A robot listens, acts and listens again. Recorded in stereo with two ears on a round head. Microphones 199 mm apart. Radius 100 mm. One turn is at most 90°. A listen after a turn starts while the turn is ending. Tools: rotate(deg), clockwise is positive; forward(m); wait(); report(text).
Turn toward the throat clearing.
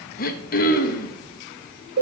rotate(-40)
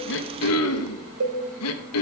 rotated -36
rotate(-90)
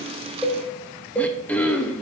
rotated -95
report("Facing the throat clearing.")